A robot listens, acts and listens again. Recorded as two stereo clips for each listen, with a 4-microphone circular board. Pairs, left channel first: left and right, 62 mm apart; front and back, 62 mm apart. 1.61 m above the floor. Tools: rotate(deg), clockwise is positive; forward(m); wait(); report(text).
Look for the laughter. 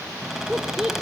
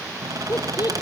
rotate(10)
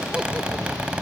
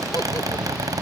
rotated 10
wait()
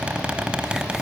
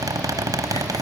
wait()
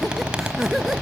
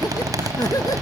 report("Facing the laughter.")